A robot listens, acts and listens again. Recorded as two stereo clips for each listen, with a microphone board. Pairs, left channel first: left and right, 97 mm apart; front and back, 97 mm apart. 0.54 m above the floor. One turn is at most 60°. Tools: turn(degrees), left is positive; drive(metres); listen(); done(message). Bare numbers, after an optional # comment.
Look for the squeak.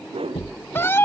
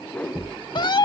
# The squeak: 105° left.
turn(60)
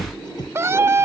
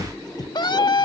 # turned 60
# The squeak is now 45° left.
turn(45)
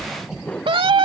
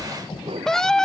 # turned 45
listen()
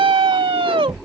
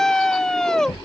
done("Facing the squeak.")